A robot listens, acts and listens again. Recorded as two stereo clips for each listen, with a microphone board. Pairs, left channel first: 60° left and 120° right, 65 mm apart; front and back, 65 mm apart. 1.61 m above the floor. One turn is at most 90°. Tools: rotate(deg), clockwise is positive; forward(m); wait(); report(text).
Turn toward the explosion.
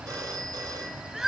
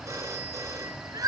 wait()
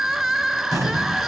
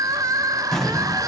rotate(80)
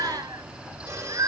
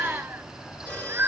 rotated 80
report("I heard an explosion from this way, but can't make it out now.")